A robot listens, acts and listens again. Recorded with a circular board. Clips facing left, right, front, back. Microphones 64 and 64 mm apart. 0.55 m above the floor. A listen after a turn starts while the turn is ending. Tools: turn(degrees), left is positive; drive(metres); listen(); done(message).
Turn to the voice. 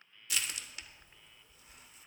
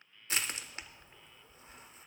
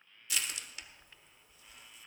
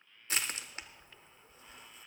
listen()
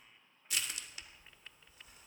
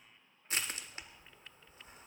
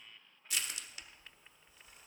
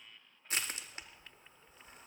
listen()
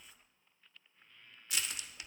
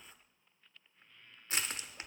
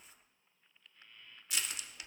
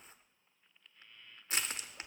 done("I can't make out anyone speaking to turn to.")